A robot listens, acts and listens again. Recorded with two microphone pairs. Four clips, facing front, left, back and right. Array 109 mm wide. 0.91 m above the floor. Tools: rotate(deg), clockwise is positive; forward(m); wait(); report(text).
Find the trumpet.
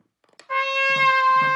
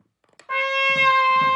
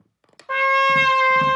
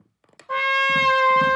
rotate(-170)
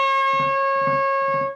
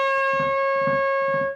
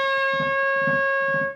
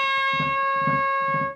rotate(15)
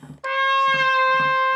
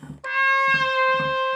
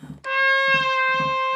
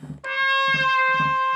report("Facing the trumpet, under 1 m away.")